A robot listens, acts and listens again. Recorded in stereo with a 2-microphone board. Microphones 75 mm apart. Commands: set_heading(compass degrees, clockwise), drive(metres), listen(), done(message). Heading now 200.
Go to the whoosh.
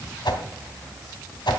set_heading(110)
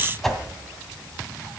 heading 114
drive(1.0)
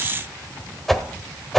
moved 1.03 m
drive(1.0)
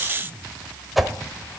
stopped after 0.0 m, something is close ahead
done("Arrived at the whoosh, straight ahead.")